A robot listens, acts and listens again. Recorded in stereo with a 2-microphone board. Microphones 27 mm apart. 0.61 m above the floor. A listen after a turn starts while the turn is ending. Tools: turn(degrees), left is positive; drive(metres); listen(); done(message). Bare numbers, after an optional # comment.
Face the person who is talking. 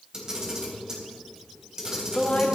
# The woman speaking: about 60° left or 120° left.
turn(60)
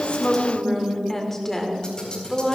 # So it is at 20° left.
turn(20)
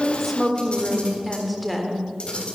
done("Facing the woman speaking, 1 to 2 m away.")